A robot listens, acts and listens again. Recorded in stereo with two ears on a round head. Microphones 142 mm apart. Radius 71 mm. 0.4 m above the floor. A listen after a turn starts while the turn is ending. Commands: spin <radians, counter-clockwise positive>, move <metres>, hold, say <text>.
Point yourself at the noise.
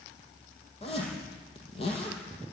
spin 0.61
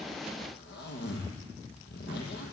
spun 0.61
spin 1.83
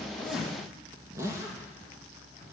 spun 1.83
spin -0.35
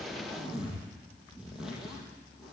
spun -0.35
say Facing the zipper.